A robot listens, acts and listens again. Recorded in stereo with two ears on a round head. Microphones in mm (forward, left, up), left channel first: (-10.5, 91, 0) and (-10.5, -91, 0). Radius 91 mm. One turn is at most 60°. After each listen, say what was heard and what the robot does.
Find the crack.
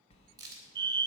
The crack: about 20° right or 160° right. Turn 20° right.
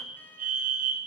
Keep listening.
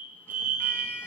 I heard a crack, but can't make it out now. It was about straight ahead or 140° right.